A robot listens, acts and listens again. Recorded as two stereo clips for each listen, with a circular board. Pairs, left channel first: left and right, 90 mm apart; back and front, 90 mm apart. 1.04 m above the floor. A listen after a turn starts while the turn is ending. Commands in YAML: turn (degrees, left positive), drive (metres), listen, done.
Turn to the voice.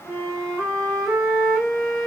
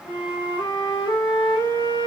listen: true
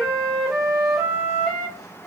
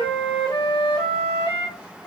listen: true
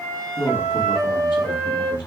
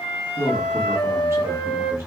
turn: 60
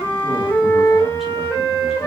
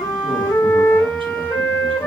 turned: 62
listen: true
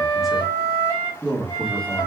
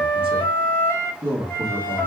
done: "Facing the man speaking, 1 to 2 m away."